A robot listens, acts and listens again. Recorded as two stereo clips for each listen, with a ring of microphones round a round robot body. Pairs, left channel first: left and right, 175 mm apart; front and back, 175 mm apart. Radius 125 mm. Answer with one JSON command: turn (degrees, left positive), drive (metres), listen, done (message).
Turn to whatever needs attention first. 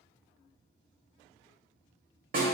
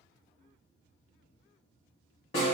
{"listen": true}
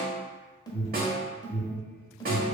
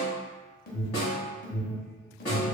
{"turn": 25}
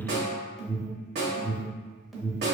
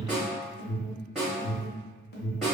{"done": "Found it: an alarm, straight ahead."}